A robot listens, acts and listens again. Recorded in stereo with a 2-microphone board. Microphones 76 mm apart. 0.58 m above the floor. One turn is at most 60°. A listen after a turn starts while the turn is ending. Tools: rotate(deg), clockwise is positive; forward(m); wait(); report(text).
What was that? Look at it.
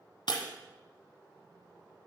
rotate(-60)
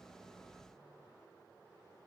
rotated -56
rotate(-35)
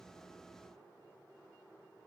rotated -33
report("Facing where the breaking glass came from. I can't hear it now.")